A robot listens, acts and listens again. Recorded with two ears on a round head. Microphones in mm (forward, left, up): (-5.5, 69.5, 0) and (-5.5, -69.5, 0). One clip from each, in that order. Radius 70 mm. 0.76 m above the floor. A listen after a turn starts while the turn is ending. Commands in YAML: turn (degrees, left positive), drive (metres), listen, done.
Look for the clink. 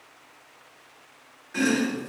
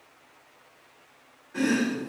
listen: true
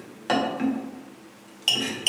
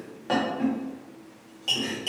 listen: true
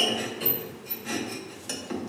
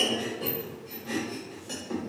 done: "I can't make out a clink to turn to."